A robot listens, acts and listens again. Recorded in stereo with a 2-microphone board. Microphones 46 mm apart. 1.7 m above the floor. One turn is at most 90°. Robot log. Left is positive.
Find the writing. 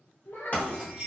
note: The writing: about 40° left or 140° left.
cmd yaw +40
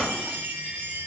cmd idle
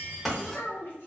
end: Found it: writing, straight ahead.